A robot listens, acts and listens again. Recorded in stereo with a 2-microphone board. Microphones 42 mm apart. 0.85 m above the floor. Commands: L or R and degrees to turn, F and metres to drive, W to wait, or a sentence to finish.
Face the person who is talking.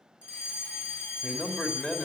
L25
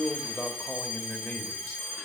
L130
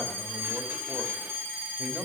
R35
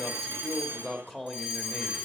Facing the man speaking, 1 to 2 m away.